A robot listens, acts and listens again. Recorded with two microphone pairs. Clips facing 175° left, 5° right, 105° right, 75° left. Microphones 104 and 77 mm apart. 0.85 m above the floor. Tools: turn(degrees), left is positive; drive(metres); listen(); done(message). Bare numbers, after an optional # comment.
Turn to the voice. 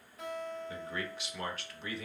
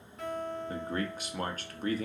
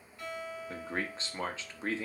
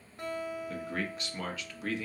# The man speaking: 50° right.
turn(-50)
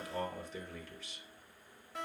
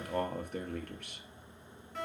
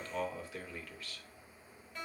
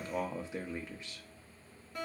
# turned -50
# The man speaking is now 15° left.
turn(15)
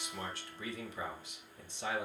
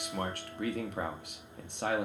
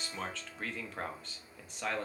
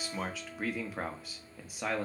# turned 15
done("Facing the man speaking.")